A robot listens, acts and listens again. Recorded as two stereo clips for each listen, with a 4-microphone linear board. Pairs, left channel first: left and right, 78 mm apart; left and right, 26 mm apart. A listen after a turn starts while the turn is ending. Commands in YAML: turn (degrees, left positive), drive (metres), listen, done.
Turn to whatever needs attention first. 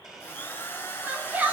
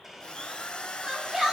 turn: -25
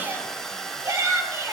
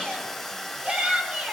turn: -135
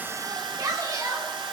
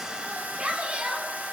turn: -45
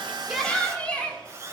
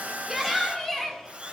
turn: 15
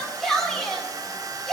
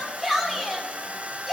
done: "Facing the shout."